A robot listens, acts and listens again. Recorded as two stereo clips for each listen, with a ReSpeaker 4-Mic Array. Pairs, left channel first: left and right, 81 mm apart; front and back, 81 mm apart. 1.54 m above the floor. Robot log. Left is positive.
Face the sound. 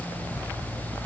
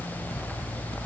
cmd idle
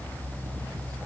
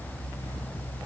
cmd idle
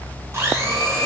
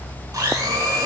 note: The blender: 140° right.
cmd yaw -140
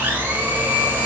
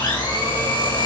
note: The blender is now 25° right.
cmd yaw -25
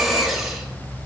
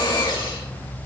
end: Facing the blender, 2 to 4 m away.